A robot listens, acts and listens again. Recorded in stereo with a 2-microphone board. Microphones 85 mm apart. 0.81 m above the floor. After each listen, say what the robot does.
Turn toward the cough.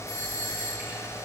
Keep listening.
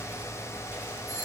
Keep listening.
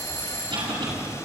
Turn 90° right.
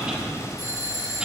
Turn 10° right.
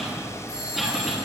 Found it: a cough, straight ahead.